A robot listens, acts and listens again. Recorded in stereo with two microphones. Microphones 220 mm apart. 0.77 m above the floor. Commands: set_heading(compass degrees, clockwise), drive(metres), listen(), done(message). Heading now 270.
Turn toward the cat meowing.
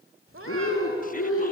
set_heading(340)
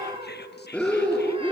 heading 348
set_heading(13)
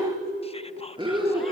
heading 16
listen()
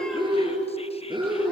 listen()
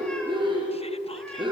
done("I heard a cat meowing from this way, but can't make it out now.")